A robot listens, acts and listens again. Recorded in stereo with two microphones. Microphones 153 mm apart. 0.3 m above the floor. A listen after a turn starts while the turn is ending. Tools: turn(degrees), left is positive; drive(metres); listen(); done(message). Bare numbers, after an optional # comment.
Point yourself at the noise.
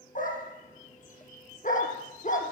# The dog barking: about 60° left or 120° left.
turn(60)
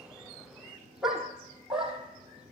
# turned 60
done("Facing the dog barking, over 4 m away.")